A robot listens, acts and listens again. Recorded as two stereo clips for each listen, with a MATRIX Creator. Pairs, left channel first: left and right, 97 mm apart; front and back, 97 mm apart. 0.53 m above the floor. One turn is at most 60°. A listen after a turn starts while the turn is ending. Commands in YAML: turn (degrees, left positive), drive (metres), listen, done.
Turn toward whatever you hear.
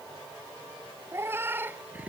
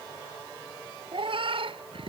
turn: -60
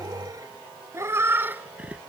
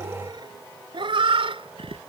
turn: -60
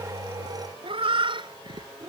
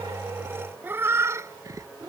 turn: -60
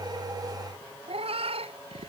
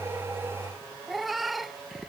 turn: -60
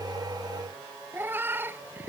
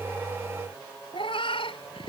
turn: -20
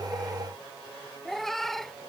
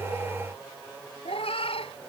done: "Facing the cat meowing."